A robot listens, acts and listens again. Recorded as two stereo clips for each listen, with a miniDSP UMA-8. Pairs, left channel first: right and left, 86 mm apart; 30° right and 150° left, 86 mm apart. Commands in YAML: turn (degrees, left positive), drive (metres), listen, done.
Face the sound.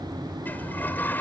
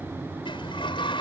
turn: -20
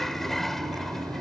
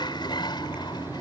done: "Found it: a sliding door, straight ahead."